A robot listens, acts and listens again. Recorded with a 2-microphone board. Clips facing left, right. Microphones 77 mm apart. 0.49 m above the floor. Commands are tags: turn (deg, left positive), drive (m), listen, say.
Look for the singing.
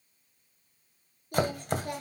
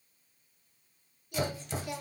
<turn deg="40"/>
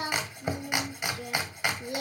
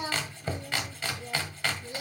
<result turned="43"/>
<turn deg="95"/>
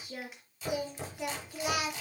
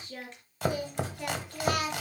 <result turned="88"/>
<turn deg="10"/>
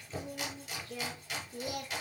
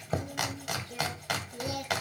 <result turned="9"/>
<say>Facing the singing, 2 to 4 m away.</say>